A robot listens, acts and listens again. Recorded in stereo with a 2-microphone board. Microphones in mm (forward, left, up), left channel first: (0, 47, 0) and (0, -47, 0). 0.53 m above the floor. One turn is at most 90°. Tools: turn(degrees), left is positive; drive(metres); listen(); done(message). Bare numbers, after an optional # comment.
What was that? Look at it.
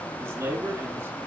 # The man speaking: about 30° right or 150° right.
turn(-30)
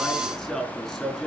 done("Facing the man speaking.")